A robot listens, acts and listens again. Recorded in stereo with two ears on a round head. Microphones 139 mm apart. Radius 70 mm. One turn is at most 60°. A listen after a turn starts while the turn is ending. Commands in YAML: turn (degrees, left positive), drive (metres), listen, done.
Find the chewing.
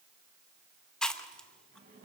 turn: 30
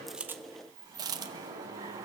turn: -25
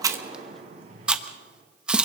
done: "Facing the chewing."